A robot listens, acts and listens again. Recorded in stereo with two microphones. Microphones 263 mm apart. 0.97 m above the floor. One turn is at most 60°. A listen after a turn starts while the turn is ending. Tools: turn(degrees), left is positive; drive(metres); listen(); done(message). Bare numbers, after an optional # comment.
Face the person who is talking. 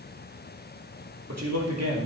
turn(-60)
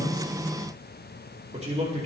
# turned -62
# So it is at 25° right.
turn(-25)
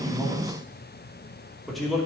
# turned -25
done("Found it: a man speaking, straight ahead, 2 to 4 m away.")